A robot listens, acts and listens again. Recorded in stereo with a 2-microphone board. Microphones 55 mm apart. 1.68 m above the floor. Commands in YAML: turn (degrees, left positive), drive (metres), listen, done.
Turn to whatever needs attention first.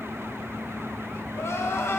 turn: 60
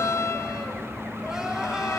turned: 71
turn: -15
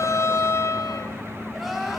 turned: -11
done: "Facing the crying."